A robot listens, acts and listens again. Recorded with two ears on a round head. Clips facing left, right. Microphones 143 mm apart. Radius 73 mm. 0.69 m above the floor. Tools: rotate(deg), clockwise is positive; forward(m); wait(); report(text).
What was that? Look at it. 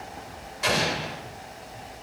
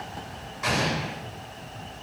rotate(-35)
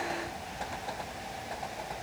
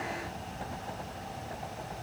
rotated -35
wait()
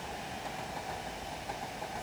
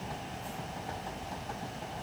report("I heard an explosion, but can't make it out now. It was about straight ahead or 110° left.")